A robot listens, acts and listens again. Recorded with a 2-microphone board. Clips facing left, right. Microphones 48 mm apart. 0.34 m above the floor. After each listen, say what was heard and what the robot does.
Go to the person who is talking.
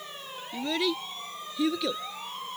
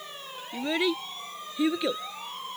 The child speaking: about 25° right or 155° right. Turn 25° right.
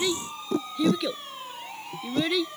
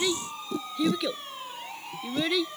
Drive 1.0 m forward.
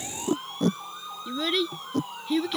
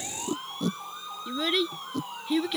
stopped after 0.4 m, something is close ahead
Blocked. The child speaking is further on, straight ahead.